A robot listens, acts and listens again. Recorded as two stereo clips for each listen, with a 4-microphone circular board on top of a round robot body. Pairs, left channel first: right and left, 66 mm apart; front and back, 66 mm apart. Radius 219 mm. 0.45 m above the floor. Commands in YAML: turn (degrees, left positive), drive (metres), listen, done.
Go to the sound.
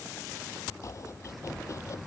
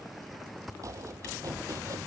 turn: -135
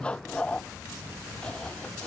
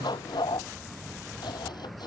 turn: -15
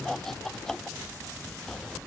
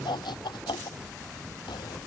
drive: 1.0
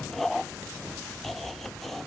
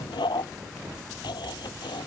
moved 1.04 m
drive: 1.0
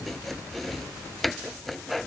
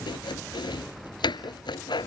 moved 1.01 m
drive: 1.0
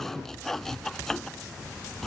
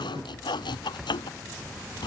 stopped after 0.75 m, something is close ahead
done: "I am next to the chopping."